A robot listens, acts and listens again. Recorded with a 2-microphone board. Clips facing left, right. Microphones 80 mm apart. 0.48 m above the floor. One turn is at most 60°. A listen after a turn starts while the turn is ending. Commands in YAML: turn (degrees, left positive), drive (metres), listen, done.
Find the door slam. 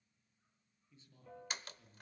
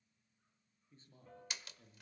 turn: 45
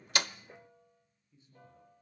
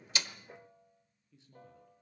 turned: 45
listen: true
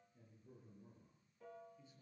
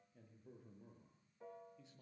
done: "I heard a door slam, but can't make it out now. It was about straight ahead or 90° left."